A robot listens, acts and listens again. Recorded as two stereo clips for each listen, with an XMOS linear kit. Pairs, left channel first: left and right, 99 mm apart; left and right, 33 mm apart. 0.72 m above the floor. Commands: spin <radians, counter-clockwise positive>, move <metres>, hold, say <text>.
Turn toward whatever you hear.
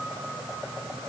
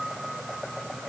hold
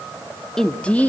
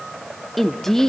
spin 0.26
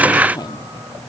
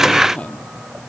spin 2.36
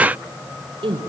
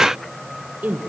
spin -1.13
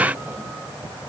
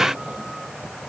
hold
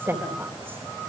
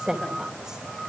spin -0.44
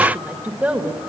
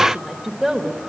spin -0.26
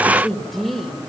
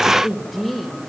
say Found it: a woman speaking, straight ahead, 2 to 4 m away.